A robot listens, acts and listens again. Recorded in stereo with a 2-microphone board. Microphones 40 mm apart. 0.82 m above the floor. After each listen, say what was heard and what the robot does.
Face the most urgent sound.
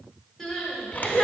Turn 30° left.
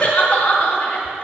So it is at 145° left. Turn 145° left.
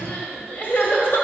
The crying is now 50° left. Turn 50° left.
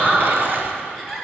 Found it: crying, straight ahead.